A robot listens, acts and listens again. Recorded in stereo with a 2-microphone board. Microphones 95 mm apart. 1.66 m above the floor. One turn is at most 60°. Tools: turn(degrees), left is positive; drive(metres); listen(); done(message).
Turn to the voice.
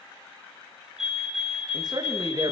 turn(degrees=-40)
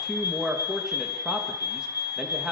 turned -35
done("Found it: a man speaking, straight ahead, 2 to 4 m away.")